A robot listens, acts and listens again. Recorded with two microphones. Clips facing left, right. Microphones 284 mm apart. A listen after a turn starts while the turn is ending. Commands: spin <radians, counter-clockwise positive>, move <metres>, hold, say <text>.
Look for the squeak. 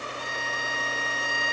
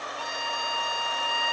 hold
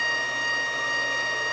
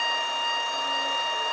hold
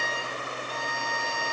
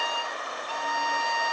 say I can't make out a squeak, only a violin.